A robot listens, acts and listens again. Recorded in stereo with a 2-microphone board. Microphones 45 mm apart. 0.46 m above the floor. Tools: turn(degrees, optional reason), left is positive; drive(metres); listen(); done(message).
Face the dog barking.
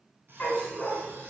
turn(degrees=25, reason="The dog barking: about 25° left or 155° left.")
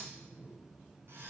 listen()
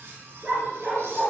turn(degrees=-25, reason="So it is at 25° right.")
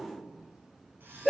done("Facing the dog barking.")